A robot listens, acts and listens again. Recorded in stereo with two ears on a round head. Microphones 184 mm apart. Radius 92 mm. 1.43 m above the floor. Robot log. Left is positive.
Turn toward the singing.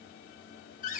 cmd idle
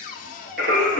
note: The singing: about 55° right or 125° right.
cmd yaw -55
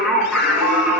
note: So it is at 10° right.
cmd yaw -10
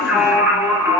note: The singing is now 15° right.
cmd yaw -15
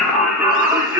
note: The singing is now 15° right.
cmd yaw -15
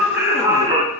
note: The singing is now 20° right.
cmd yaw -20
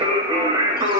note: The singing is now 20° right.
cmd yaw -20
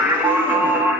end: Facing the singing.